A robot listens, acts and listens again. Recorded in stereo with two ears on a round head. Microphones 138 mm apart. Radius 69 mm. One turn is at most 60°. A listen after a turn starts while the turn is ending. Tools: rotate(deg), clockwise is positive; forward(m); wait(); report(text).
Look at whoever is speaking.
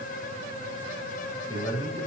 rotate(-30)
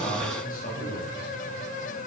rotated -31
rotate(-60)
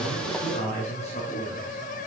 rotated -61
rotate(-45)
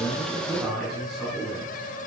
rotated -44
report("Found it: a man speaking, straight ahead, over 4 m away.")